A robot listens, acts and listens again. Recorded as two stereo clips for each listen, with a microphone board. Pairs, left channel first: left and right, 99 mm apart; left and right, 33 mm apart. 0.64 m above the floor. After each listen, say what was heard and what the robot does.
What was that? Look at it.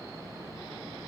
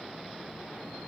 Keep listening.
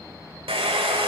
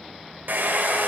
The hair dryer: about 70° right or 110° right. Turn 70° right.
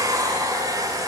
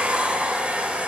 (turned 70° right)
So it is at 40° right. Turn 40° right.
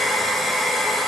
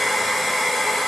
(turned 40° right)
Facing the hair dryer.